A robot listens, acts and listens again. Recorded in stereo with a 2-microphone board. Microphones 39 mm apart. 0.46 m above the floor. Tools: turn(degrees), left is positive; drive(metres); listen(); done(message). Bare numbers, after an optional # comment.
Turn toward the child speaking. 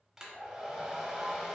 listen()
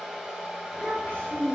# The child speaking: about 40° left or 140° left.
turn(40)
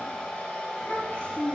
# The child speaking: about 30° left or 150° left.
turn(30)
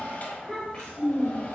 # So it is at 25° left.
turn(25)
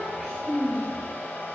# The child speaking is now 10° right.
turn(-10)
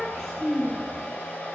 done("Found it: a child speaking, straight ahead.")